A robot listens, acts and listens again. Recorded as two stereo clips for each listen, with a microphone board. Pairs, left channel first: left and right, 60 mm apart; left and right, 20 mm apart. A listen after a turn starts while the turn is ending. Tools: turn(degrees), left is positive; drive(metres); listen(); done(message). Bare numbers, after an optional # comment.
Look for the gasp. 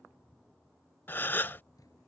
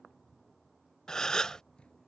# The gasp: about 35° left or 145° left.
turn(35)
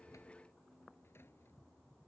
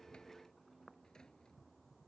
listen()
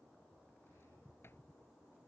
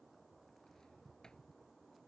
done("I heard a gasp, but can't make it out now. It was about straight ahead or 110° left.")